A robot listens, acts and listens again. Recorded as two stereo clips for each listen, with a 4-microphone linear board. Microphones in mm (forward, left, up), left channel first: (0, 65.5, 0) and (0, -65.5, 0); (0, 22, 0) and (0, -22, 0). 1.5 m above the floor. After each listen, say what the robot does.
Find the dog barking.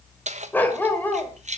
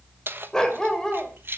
Turn 30° left.
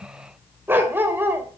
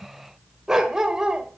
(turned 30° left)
Turn 15° right.
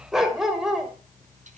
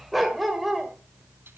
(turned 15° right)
Facing the dog barking.